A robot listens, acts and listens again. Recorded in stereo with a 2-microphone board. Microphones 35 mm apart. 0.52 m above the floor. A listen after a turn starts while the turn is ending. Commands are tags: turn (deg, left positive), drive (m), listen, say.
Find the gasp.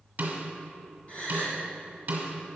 <turn deg="40"/>
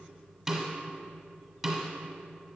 <listen/>
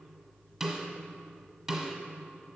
<say>I heard a gasp, but can't make it out now. It was about straight ahead or 100° left.</say>